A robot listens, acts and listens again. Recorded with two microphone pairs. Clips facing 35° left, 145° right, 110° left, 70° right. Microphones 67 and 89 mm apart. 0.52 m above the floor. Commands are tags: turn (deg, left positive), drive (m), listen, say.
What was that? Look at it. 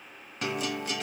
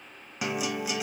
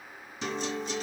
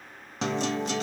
<turn deg="-65"/>
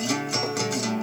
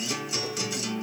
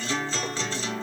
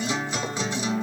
<say>Found it: a guitar, straight ahead, 1 to 2 m away.</say>